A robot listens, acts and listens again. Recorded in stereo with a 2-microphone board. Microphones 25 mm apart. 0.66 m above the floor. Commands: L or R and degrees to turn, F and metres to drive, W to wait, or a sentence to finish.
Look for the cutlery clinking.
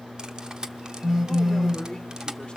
R30
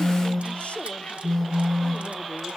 W
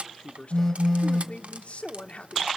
R125
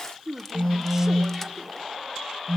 W
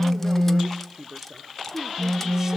W
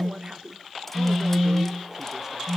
I heard cutlery clinking from this way, but can't make it out now.